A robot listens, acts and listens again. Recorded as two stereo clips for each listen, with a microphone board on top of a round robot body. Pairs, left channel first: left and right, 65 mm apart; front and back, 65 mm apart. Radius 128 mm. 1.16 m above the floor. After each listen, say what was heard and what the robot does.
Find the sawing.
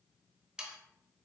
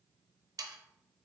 The sawing: 165° right. Turn 165° right.
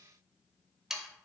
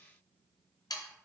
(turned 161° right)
Facing the sawing.